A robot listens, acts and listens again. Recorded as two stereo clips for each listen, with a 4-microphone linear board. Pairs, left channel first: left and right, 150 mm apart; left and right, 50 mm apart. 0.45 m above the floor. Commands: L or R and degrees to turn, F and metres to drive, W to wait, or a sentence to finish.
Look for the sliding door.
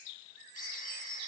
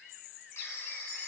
W
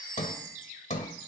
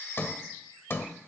L55
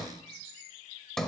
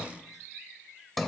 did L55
Found it: a sliding door, straight ahead.